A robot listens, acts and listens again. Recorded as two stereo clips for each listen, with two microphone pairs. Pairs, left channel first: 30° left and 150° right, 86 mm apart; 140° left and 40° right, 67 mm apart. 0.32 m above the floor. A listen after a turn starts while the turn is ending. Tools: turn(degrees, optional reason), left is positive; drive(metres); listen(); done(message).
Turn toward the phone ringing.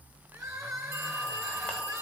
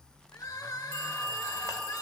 turn(degrees=-85, reason="The phone ringing: 85° right.")
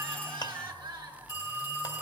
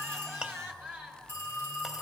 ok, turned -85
done("Found it: a phone ringing, straight ahead, over 4 m away.")